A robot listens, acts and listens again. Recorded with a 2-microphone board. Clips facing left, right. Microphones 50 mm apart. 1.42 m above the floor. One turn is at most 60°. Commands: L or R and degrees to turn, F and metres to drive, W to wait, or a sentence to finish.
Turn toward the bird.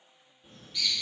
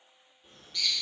L30
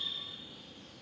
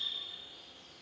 L60
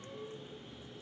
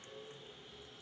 L60
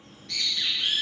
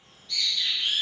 L60
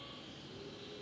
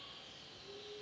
L30
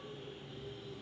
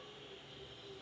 Facing the bird.